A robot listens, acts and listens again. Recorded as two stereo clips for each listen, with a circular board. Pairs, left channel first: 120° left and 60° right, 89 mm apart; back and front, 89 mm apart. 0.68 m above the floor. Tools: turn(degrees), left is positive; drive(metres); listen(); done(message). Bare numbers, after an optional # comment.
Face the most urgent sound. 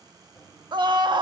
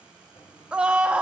# The scream: 75° right.
turn(-75)
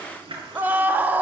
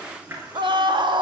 # The scream is now 10° left.
turn(10)
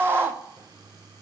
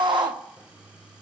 done("Found it: a scream, straight ahead, 1 to 2 m away.")